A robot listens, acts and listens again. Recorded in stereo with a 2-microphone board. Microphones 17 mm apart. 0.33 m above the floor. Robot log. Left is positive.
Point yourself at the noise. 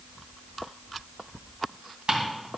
note: The ticking: about 60° right or 120° right.
cmd yaw -60
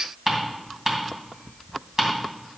note: So it is at 40° right.
cmd yaw -40
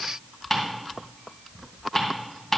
end: Facing the ticking.